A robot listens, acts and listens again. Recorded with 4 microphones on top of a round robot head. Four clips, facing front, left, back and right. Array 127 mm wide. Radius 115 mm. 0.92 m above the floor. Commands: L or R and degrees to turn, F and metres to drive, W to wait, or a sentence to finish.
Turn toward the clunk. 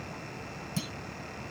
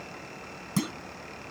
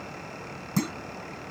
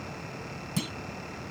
L145
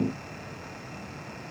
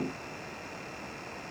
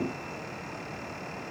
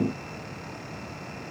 I heard a clunk from this way, but can't make it out now.